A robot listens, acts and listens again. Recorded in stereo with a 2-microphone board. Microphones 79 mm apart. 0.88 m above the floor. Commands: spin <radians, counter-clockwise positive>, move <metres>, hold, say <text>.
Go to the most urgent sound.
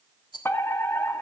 spin 0.52
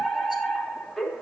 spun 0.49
move 1.0
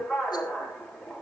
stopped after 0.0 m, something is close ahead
say Blocked. The fire alarm is further on, straight ahead.